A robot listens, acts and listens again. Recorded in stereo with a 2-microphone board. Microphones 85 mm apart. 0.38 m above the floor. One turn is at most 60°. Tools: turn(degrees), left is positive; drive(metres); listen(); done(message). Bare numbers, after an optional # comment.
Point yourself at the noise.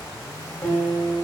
# The guitar: about 25° left or 155° left.
turn(25)
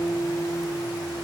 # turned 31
# So it is at 130° left.
turn(60)
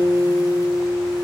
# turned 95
# The guitar is now 30° left.
turn(30)
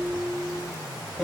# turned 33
done("Facing the guitar, over 4 m away.")